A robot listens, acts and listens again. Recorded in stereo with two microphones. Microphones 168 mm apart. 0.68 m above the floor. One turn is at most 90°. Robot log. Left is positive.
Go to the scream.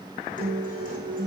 cmd idle
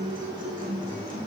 cmd idle
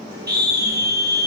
note: The scream: about 75° right or 105° right.
cmd yaw -75
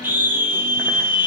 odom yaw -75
note: So it is at 10° right.
cmd yaw -10
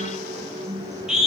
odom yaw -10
cmd fwd 1.0
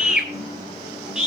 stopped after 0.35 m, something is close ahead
end: Something is in my way. I am facing the scream but have not reached it.